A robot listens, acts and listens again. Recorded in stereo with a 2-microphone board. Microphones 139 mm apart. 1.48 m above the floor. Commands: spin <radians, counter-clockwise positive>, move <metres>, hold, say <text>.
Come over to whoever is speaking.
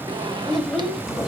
spin 0.52
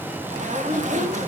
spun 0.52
spin -0.44
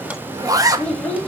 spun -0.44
spin 0.17
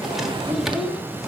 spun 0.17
move 1.0
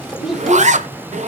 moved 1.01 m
move 1.0
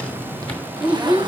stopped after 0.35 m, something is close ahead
spin -0.17
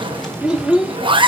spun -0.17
say Arrived at the child speaking, straight ahead.